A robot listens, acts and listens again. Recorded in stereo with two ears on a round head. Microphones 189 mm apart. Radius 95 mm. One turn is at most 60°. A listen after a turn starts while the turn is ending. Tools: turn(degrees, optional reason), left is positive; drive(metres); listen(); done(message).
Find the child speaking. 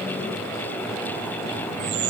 listen()
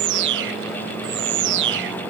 listen()
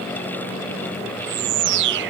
done("I can't make out a child speaking to turn to.")